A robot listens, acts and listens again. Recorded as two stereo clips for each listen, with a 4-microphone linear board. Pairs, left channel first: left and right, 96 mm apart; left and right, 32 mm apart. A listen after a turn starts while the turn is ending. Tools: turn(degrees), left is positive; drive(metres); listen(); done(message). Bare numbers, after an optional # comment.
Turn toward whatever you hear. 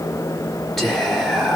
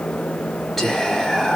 turn(30)
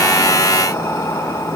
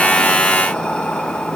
listen()
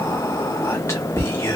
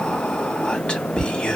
# So it is at 150° left.
turn(150)
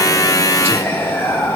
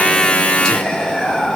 # The whispering is now 25° left.
turn(25)
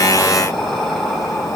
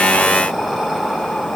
done("Found it: whispering, straight ahead, 1 to 2 m away.")